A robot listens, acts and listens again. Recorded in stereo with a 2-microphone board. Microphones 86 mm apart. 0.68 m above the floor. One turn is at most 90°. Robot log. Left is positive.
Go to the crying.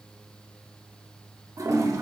cmd idle
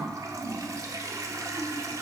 cmd idle
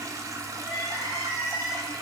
note: The crying: about 75° right or 105° right.
cmd yaw -75
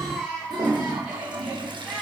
cmd fwd 1.0
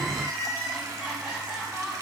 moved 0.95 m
note: The crying is now 10° right.
cmd yaw -10
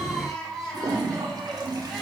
cmd fwd 1.0
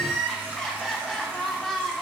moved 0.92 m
cmd fwd 1.0
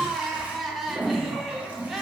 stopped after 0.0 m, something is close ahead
end: Arrived at the crying, straight ahead.